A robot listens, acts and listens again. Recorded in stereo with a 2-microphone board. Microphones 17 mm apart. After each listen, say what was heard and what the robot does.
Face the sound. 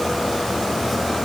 Keep listening.
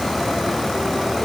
Keep listening.
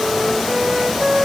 The flute: about 50° right or 130° right. Turn 50° right.
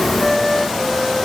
Found it: a flute, straight ahead, 1 to 2 m away.